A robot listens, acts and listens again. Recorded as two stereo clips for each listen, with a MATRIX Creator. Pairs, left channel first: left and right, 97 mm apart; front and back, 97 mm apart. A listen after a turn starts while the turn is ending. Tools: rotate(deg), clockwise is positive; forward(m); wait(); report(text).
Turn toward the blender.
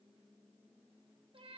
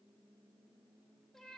wait()
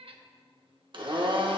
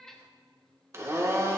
rotate(120)
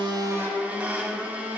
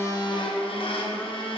rotate(15)
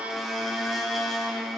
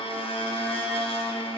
report("Facing the blender, 1 to 2 m away.")